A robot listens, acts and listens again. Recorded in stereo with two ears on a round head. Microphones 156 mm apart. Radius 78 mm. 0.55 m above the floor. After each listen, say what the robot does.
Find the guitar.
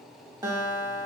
Turn 20° right.
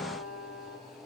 Found it: a guitar, straight ahead, under 1 m away.